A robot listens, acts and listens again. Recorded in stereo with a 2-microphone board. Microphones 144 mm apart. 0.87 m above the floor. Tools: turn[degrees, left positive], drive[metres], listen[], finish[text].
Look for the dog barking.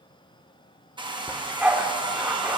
Action: turn[-30]
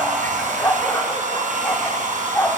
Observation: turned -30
Thought: So it is at 20° left.
Action: turn[20]
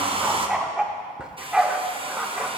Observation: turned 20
Action: finish[Found it: a dog barking, straight ahead.]